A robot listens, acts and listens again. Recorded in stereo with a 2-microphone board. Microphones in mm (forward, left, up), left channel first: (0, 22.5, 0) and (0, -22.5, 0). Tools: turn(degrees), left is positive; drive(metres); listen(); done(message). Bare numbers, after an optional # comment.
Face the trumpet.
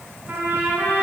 # The trumpet: about 50° right or 130° right.
turn(-50)
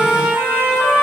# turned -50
# So it is at 80° right.
turn(-80)
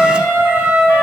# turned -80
# The trumpet is now 25° right.
turn(-25)
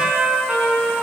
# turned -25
# The trumpet is now 15° right.
turn(-15)
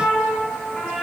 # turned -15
done("Found it: a trumpet, straight ahead, over 4 m away.")